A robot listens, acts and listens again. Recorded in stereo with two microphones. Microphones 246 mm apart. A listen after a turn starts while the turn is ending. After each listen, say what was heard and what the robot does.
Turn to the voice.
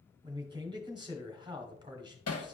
The man speaking: about 20° right or 160° right. Turn 20° right.
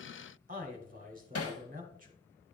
So it is at 145° right. Turn 145° right.
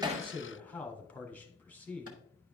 Found it: a man speaking, straight ahead, 1 to 2 m away.